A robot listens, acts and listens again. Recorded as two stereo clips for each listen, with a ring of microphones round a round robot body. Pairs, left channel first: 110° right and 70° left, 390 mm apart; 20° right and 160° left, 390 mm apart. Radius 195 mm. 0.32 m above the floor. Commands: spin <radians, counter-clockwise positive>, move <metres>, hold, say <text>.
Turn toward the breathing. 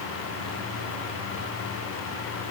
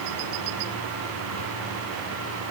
hold
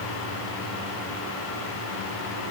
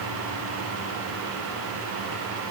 hold
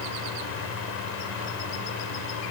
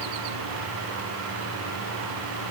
say I can't make out breathing to turn to.